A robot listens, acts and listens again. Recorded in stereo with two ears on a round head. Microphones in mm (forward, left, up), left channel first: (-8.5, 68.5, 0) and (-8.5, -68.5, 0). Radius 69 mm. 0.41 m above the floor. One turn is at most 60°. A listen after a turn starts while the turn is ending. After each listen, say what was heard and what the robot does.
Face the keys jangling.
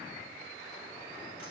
Keep listening.
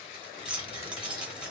Turn 30° right.
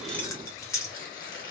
So it is at 25° left. Turn 25° left.
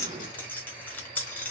The keys jangling is now 15° left. Turn 15° left.
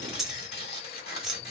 Facing the keys jangling.